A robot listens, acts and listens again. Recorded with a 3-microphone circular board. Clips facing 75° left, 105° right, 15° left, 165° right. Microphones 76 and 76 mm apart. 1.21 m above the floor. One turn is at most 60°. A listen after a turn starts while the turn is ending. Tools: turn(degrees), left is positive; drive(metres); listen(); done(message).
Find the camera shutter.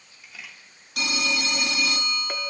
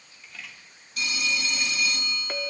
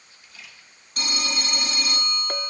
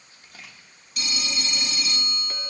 turn(degrees=60)
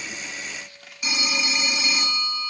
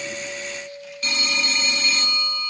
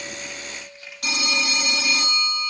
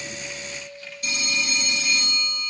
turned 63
turn(degrees=60)
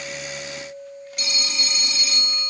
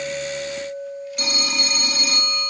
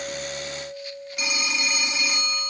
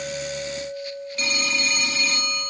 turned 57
turn(degrees=35)
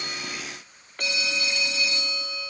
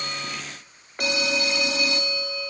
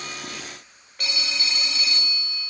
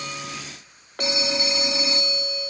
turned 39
done("Facing where the camera shutter came from. I can't hear it now.")